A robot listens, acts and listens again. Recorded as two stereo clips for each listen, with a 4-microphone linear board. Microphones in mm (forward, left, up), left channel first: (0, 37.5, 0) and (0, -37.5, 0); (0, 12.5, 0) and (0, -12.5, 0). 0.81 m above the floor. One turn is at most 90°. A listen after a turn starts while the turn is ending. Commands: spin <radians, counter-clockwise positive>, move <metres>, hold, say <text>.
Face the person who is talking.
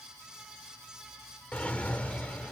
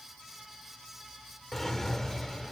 hold
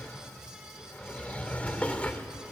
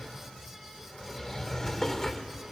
hold
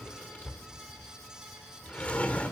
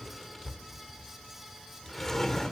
say I can't make out anyone speaking, only a drawer.